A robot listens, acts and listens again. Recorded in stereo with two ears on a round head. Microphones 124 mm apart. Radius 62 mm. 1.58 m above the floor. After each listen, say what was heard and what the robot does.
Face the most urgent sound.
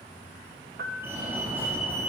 The fire alarm: about 15° right or 165° right. Turn 15° right.
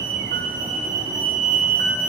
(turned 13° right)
So it is at 150° right. Turn 150° right.
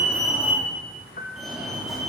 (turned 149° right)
Facing the fire alarm, over 4 m away.